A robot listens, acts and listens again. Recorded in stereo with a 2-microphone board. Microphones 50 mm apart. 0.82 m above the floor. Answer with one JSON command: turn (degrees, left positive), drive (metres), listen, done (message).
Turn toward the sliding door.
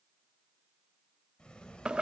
{"turn": 20}
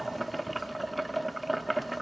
{"listen": true}
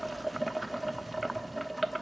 {"listen": true}
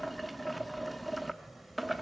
{"done": "Found it: a sliding door, straight ahead, 2 to 4 m away."}